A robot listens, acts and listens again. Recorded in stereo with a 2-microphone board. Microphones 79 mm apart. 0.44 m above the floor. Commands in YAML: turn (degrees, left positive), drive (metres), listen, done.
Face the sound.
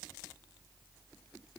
listen: true
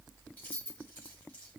turn: 20
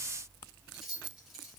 done: "Found it: keys jangling, straight ahead, 1 to 2 m away."